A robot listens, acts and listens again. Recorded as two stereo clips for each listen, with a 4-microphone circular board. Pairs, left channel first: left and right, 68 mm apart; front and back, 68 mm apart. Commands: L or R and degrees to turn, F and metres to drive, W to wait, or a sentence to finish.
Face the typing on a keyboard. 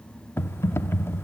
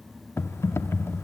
L45
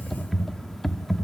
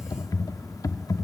Found it: typing on a keyboard, straight ahead, under 1 m away.